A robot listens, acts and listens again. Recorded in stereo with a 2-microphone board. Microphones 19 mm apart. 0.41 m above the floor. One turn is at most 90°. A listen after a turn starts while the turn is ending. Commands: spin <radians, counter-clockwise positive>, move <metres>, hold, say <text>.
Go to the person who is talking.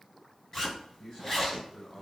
spin 0.70
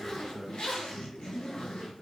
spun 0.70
move 1.0
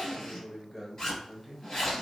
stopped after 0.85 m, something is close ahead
spin 0.26
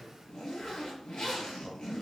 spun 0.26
hold
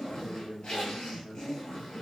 say Arrived at the man speaking, straight ahead.